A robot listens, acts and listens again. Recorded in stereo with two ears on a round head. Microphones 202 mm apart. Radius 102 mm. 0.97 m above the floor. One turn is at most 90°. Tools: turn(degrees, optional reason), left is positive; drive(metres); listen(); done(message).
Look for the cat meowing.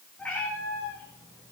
turn(degrees=30)
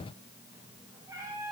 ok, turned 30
turn(degrees=-10, reason="So it is at 10° right.")
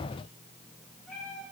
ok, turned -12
done("Facing the cat meowing, over 4 m away.")